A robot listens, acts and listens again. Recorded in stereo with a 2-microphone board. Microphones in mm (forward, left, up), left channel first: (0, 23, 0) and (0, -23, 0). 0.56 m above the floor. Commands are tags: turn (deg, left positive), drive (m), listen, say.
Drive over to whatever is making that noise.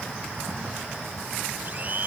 <turn deg="-45"/>
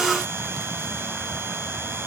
<listen/>
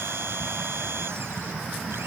<turn deg="-90"/>
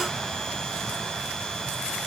<listen/>
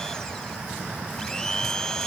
<turn deg="15"/>
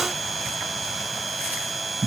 <drive m="1.0"/>
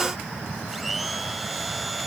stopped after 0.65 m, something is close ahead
<say>Blocked. The blender is further on, straight ahead.</say>